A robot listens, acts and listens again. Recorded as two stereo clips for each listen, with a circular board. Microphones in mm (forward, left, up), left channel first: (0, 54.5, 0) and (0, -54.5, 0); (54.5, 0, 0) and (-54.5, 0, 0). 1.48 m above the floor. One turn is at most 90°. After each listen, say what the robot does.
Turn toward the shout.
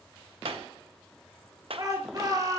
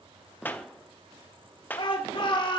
Turn 40° right.
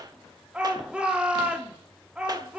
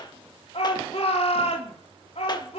Turn 10° right.
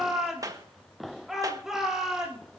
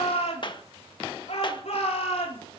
Facing the shout.